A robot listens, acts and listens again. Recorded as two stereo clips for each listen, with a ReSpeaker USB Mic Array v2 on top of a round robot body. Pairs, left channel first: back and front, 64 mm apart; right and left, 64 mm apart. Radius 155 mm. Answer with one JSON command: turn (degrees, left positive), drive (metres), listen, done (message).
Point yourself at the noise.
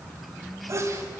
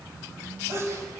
{"turn": 40}
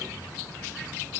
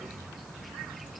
{"done": "Facing where the sneeze came from. I can't hear it now."}